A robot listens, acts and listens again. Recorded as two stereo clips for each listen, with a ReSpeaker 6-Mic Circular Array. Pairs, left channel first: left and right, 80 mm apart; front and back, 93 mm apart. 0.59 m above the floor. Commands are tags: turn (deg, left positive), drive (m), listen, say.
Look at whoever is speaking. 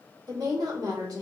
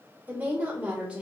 <turn deg="-105"/>
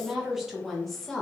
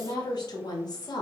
<turn deg="10"/>
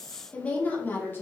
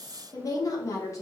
<turn deg="40"/>
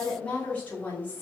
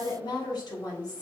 <turn deg="30"/>
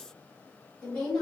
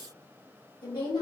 <turn deg="10"/>
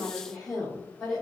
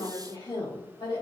<say>Found it: a woman speaking, straight ahead, 1 to 2 m away.</say>